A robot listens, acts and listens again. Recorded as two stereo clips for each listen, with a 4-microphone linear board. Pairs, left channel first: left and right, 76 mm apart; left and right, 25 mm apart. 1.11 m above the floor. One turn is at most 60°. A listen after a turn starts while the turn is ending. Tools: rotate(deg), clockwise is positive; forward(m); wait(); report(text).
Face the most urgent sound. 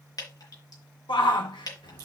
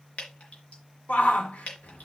rotate(-60)
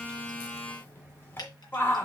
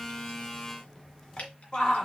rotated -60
rotate(-30)
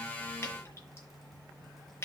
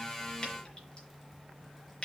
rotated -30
wait()
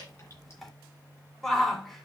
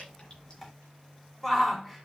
report("Facing the shout, 2 to 4 m away.")